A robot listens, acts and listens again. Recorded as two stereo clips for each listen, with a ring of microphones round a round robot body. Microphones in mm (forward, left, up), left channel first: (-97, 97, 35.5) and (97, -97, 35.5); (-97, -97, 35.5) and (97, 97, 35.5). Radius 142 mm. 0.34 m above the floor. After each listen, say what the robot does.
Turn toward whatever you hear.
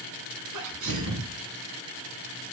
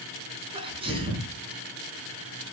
Turn 25° right.
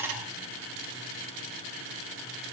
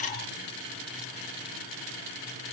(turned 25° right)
Facing where the sneeze came from. I can't hear it now.